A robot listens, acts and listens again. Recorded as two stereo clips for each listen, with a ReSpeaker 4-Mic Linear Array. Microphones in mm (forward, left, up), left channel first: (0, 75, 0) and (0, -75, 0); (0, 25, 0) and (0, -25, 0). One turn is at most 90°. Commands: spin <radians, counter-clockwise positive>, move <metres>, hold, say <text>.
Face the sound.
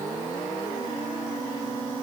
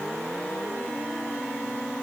hold
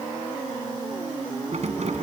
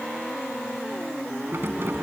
spin -0.79
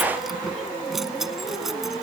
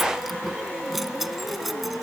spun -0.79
say Facing the keys jangling.